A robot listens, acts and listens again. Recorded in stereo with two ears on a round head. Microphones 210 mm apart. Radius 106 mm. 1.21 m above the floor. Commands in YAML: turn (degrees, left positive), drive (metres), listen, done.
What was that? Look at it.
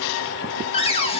turn: 25
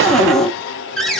done: "Facing the cupboard door."